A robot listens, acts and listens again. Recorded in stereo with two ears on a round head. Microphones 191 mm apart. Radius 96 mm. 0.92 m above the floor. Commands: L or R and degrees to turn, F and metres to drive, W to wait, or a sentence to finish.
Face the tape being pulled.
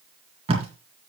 R30
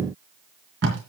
R120
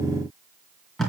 Found it: tape being pulled, straight ahead.